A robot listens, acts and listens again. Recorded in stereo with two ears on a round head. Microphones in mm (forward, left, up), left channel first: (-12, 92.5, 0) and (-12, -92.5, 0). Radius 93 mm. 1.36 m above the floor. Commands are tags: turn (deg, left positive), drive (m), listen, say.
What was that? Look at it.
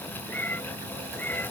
<turn deg="30"/>
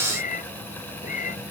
<turn deg="140"/>
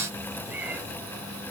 <say>Facing the cat meowing.</say>